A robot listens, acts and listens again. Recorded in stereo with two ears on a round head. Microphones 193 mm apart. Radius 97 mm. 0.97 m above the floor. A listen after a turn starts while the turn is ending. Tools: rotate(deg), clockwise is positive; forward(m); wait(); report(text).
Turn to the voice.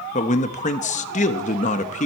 rotate(-35)
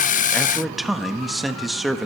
report("Found it: a man speaking, straight ahead, under 1 m away.")